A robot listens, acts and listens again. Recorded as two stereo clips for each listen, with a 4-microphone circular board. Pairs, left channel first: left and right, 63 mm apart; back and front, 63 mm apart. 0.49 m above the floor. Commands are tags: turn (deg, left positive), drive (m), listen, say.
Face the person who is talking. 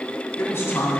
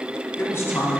<turn deg="135"/>
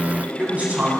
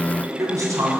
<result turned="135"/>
<turn deg="-25"/>
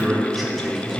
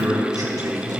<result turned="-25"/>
<say>Facing the man speaking, 2 to 4 m away.</say>